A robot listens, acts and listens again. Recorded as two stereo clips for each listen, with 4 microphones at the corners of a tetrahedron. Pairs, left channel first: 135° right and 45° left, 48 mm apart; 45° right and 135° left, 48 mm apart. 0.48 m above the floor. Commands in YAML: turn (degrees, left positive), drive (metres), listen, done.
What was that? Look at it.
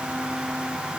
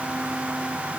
listen: true
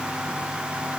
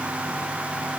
listen: true
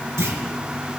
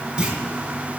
turn: 65
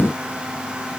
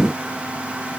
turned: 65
done: "I heard a clunk from this way, but can't make it out now."